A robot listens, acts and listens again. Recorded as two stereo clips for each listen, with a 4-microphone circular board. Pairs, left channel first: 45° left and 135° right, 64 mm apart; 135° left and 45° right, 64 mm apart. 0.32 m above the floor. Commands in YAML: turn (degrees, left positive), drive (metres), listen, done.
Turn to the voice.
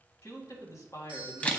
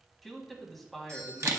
turn: 45
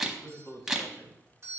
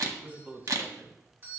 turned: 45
turn: 15
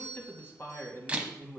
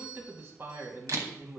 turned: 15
done: "Facing the man speaking, 2 to 4 m away."